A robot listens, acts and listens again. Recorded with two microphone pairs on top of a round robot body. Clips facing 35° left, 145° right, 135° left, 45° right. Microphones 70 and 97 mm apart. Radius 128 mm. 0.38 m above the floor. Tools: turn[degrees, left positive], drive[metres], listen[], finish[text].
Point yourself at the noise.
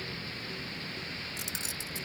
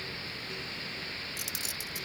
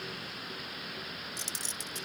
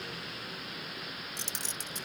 Thought: The keys jangling: 20° right.
Action: turn[-20]
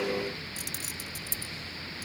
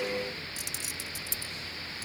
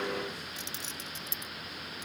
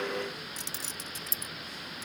Action: finish[Found it: keys jangling, straight ahead.]